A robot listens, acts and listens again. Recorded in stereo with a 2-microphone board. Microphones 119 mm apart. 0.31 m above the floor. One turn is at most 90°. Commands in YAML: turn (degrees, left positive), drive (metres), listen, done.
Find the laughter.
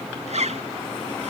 listen: true
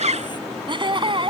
turn: -50
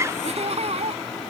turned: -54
turn: -65
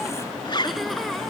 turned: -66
listen: true
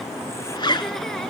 listen: true
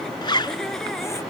done: "I heard laughter from this way, but can't make it out now."